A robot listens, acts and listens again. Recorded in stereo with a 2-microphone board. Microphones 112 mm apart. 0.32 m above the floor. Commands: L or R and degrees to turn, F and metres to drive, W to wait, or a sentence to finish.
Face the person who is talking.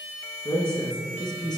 L45
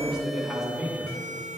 Found it: a man speaking, straight ahead.